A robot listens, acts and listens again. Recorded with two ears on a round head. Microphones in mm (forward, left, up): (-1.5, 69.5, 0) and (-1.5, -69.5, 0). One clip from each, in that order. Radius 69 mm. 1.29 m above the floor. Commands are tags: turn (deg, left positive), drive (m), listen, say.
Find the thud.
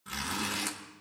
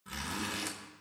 <listen/>
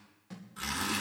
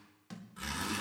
<turn deg="-50"/>
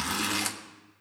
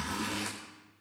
<listen/>
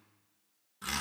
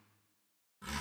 <say>I heard a thud, but can't make it out now. It was about straight ahead or 80° right.</say>